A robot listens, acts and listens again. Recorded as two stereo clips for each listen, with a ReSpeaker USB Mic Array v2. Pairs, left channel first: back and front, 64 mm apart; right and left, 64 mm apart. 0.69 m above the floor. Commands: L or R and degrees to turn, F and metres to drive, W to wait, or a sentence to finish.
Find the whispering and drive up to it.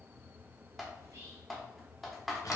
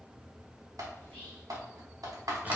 R25
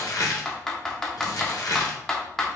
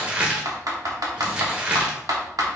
W
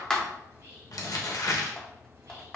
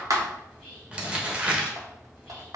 R15
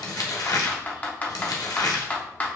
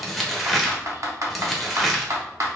W
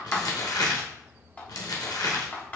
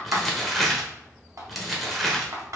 W
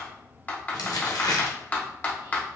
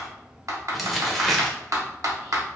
Facing where the whispering came from. I can't hear it now. I did not reach it.